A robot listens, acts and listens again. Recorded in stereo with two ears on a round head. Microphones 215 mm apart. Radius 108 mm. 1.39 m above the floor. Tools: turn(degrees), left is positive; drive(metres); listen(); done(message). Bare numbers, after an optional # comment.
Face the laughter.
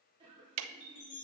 # The laughter: about 20° right or 160° right.
turn(-20)
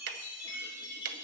listen()
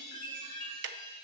listen()
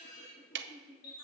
# So it is at 25° left.
turn(25)
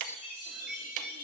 listen()
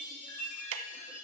listen()
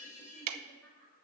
# The laughter is now 10° left.
turn(10)
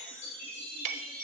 listen()
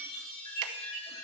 listen()
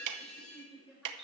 done("Found it: laughter, straight ahead.")